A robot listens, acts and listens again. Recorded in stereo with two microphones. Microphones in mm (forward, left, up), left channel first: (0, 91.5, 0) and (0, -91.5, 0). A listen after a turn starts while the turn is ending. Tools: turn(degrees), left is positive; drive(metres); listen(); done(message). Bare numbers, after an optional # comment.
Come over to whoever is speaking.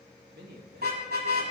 # The man speaking: about 60° right or 120° right.
turn(-60)
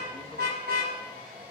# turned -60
listen()
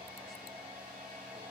listen()
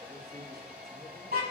done("I heard a man speaking, but can't make it out now. It was about straight ahead or 60° right. I did not reach it.")